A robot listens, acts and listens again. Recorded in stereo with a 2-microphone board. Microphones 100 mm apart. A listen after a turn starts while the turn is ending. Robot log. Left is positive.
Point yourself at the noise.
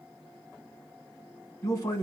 note: The man speaking: about 30° left or 150° left.
cmd yaw +30
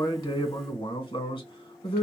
note: So it is at 115° left.
cmd yaw +115
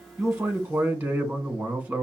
note: The man speaking is now 20° right.
cmd yaw -20
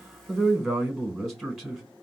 end: Found it: a man speaking, straight ahead, 1 to 2 m away.